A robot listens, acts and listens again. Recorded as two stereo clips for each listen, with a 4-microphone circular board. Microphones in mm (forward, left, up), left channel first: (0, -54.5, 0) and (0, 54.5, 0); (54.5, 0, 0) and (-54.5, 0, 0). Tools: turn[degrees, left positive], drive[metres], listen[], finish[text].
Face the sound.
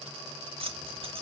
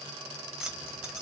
Thought: The keys jangling: 95° left.
Action: turn[95]
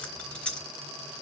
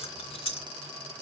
Thought: The keys jangling is now 10° right.
Action: turn[-10]
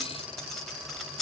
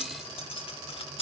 Action: finish[Facing the keys jangling, under 1 m away.]